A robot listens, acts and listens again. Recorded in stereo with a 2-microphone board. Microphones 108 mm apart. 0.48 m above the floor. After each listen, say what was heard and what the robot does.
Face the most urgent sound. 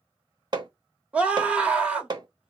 Turn 30° right.
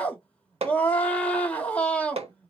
So it is at 15° left. Turn 15° left.
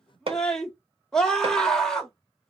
Found it: a scream, straight ahead, 1 to 2 m away.